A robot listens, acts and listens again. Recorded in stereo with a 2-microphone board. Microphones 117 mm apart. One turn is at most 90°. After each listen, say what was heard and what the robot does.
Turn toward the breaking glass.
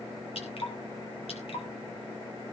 Keep listening.
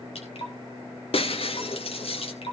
The breaking glass: about 60° left or 120° left. Turn 60° left.
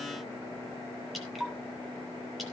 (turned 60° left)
Keep listening.
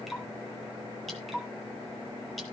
I heard breaking glass, but can't make it out now. It was about straight ahead or 60° left.